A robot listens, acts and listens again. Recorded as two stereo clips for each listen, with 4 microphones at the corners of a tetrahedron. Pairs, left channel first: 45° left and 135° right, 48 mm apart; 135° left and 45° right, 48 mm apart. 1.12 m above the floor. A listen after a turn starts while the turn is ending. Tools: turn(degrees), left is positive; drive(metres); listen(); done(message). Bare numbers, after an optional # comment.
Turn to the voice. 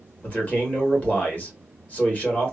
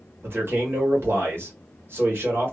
# The man speaking: 10° right.
turn(-10)
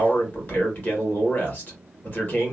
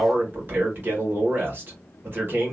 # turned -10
done("Found it: a man speaking, straight ahead, 1 to 2 m away.")